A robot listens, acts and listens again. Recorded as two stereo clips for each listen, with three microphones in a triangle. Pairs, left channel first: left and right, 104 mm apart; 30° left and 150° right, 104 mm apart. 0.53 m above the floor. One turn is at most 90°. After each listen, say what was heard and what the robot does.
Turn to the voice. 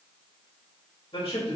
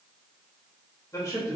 The man speaking: 90° left. Turn 90° left.
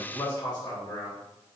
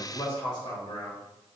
The man speaking is now 55° left. Turn 55° left.
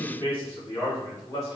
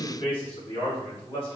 The man speaking is now 40° left. Turn 40° left.
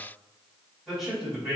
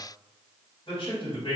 Facing the man speaking, 2 to 4 m away.